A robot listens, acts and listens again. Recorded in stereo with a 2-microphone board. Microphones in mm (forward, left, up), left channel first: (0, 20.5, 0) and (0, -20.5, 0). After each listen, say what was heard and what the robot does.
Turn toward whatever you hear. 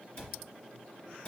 The cupboard door: about 30° left or 150° left. Turn 30° left.
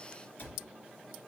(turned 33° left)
So it is at 120° left. Turn 120° left.
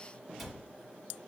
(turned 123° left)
Found it: a cupboard door, straight ahead, 1 to 2 m away.